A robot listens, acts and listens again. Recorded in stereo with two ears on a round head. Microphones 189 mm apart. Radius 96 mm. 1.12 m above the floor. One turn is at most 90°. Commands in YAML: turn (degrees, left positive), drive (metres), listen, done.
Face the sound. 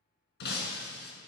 turn: 55
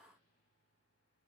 listen: true
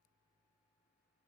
done: "I heard breaking glass, but can't make it out now. It was about straight ahead or 70° left."